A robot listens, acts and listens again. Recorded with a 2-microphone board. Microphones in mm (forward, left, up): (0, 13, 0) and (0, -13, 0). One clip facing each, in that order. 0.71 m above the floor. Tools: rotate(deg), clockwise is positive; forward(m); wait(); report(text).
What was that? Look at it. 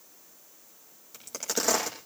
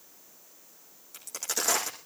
rotate(-30)
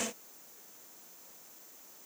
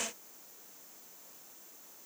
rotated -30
wait()
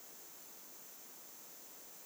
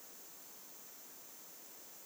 report("I heard a crack, but can't make it out now. It was about 20° right or 140° left.")